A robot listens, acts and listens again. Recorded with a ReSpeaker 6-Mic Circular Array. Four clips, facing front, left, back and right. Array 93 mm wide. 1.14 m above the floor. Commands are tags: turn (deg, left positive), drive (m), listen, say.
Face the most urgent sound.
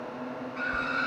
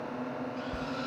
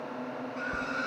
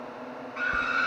<turn deg="-75"/>
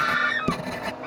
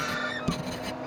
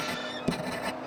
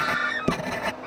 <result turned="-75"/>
<turn deg="-25"/>
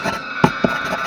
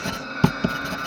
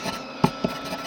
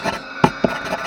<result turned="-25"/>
<listen/>
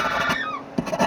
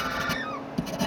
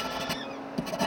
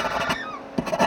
<listen/>
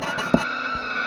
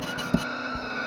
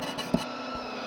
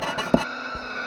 <say>Facing the scream.</say>